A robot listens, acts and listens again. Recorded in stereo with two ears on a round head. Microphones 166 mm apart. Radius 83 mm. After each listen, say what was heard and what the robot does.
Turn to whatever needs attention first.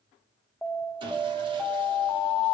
Turn 30° left.
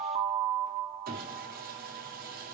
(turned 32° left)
So it is at 35° right. Turn 35° right.
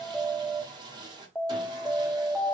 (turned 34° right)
Found it: an alarm, straight ahead, under 1 m away.